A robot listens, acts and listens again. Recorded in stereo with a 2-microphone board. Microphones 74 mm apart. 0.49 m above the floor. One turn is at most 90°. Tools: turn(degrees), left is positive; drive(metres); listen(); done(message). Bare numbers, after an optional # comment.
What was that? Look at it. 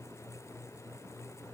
listen()
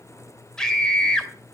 turn(30)
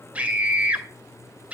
# So it is at 20° right.
turn(-20)
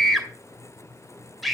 done("Facing the scream.")